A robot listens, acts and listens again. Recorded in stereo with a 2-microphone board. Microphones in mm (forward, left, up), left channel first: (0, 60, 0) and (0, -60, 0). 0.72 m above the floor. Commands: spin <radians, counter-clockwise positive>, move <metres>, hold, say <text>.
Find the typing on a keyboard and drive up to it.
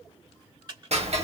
spin -0.61
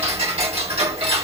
hold
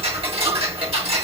hold
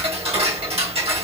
say I heard typing on a keyboard, but can't make it out now. It was about straight ahead or 110° right. I did not reach it.